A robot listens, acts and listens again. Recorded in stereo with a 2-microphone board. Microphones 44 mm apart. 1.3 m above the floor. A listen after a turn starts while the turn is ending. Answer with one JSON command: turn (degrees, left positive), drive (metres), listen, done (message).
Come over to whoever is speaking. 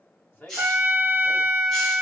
{"turn": 45}
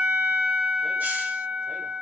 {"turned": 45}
{"listen": true}
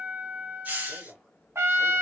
{"drive": 1.0}
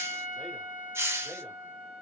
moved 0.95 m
{"listen": true}
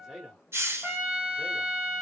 {"drive": 1.0}
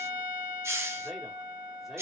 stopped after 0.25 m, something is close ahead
{"listen": true}
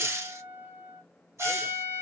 {"listen": true}
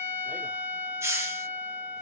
{"done": "I heard a man speaking from this way, but can't make it out now. I did not reach it."}